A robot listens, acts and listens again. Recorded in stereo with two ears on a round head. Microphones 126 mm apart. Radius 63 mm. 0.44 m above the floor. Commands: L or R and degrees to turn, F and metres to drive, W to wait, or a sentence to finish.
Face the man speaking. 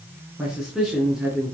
R30
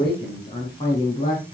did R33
L35
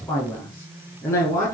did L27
L20
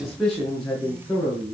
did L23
Facing the man speaking, over 4 m away.